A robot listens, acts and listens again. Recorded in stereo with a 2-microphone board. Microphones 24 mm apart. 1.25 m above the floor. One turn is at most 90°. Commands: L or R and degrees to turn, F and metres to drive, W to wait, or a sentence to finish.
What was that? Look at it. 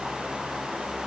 W
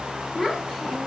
L30
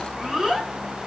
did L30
R20
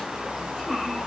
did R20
Facing the child speaking, 2 to 4 m away.